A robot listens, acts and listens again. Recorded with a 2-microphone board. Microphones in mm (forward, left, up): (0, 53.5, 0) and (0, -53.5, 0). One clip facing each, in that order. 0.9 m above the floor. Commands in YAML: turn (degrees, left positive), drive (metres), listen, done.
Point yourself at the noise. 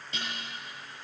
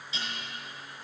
turn: 55
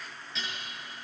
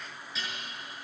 done: "Facing the dishes clattering."